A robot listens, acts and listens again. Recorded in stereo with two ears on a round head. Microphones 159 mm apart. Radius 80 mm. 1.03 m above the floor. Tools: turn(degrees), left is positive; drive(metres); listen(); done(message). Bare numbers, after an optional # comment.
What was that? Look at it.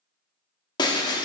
# The breaking glass: about 25° left or 155° left.
turn(25)
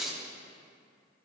done("Found it: breaking glass, straight ahead.")